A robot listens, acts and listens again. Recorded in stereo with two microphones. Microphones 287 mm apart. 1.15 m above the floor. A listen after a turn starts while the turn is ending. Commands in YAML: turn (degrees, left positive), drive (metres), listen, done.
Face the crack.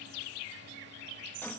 listen: true
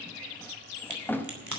turn: -90
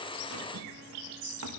done: "Facing where the crack came from. I can't hear it now."